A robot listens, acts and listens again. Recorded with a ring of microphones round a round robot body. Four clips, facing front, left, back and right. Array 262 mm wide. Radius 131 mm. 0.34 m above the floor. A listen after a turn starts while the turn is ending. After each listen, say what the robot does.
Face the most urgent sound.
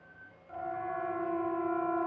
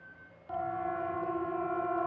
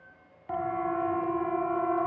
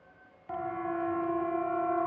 Turn 165° right.
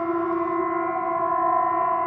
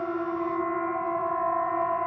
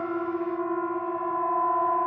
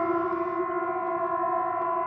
Facing the siren.